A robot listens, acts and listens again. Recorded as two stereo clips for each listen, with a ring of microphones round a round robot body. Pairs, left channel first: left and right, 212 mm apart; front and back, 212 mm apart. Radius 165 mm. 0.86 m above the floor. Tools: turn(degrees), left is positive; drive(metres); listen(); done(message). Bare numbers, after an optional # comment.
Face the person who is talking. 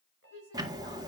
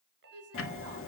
# The woman speaking: 160° left.
turn(160)
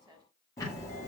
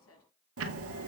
# The woman speaking is now 15° right.
turn(-15)
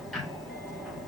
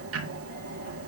listen()
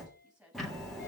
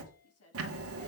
done("Facing the woman speaking, over 4 m away.")